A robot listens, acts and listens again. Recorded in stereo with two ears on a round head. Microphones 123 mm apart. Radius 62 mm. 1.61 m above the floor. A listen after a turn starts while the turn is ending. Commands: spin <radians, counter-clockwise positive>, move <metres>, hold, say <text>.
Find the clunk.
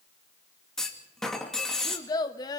spin 0.52
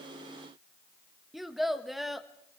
hold
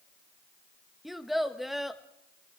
say I heard a clunk, but can't make it out now. It was about 25° right or 145° left.